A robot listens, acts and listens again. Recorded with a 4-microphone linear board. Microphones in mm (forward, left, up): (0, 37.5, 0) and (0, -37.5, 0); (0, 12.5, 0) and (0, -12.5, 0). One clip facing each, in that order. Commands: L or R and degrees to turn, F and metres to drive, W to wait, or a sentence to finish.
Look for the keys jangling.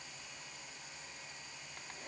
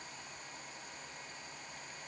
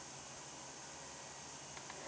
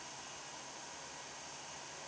W
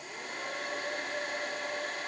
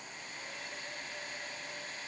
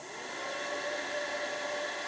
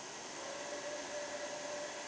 W
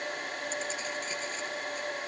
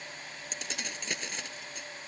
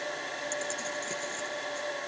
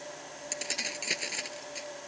R90
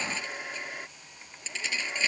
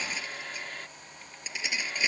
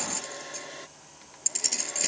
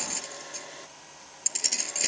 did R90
R15
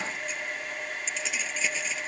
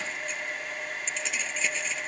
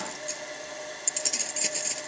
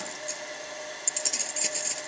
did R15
Facing the keys jangling.